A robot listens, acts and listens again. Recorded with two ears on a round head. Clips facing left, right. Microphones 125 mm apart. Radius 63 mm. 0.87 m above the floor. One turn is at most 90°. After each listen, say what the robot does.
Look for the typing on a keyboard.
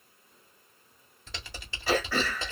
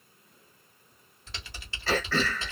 Turn 70° left.
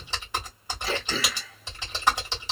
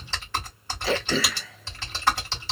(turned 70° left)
Turn 15° left.
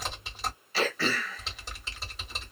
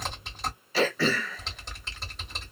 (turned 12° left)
Found it: typing on a keyboard, straight ahead.